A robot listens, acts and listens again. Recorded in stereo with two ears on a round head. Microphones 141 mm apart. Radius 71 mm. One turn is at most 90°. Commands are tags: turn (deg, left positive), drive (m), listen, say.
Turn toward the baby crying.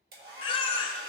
<turn deg="35"/>
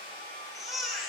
<say>Found it: a baby crying, straight ahead.</say>